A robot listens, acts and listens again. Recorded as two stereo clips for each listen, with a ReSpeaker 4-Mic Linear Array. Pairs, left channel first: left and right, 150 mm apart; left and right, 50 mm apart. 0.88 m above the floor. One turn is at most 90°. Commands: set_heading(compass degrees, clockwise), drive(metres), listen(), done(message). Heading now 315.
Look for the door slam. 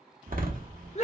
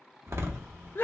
set_heading(15)
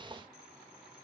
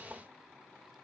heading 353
listen()
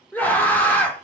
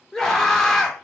done("I heard a door slam, but can't make it out now. It was about 25° right or 80° right.")